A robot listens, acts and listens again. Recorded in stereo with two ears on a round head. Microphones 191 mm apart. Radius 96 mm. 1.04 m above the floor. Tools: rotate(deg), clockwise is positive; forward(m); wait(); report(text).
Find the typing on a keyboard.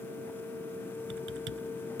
rotate(60)
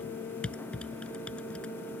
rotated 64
report("Facing the typing on a keyboard.")